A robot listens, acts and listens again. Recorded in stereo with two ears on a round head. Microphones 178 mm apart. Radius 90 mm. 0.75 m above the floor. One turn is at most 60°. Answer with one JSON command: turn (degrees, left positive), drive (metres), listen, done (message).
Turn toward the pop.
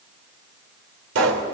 {"turn": -60}
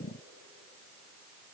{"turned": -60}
{"listen": true}
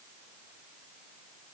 {"done": "I heard a pop, but can't make it out now. It was about straight ahead or 60° right."}